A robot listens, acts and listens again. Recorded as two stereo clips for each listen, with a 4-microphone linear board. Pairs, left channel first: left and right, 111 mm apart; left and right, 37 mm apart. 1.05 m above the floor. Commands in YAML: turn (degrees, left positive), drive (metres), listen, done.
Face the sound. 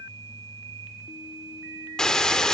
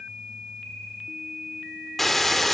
turn: 30
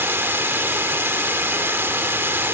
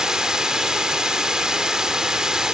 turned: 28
turn: -20
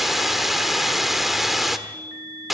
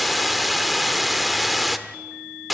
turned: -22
done: "Facing the hiss, 1 to 2 m away."